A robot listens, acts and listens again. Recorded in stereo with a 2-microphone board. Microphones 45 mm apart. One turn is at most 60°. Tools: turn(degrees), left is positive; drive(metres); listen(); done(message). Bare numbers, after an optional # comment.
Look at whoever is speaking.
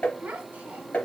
# The child speaking: about 40° right or 140° right.
turn(-40)
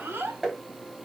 # So it is at 90° right.
turn(-60)
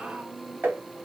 # Nothing new. It was at 30° right.
turn(-30)
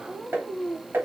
# The child speaking is now 15° left.
turn(15)
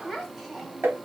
done("Facing the child speaking, 1 to 2 m away.")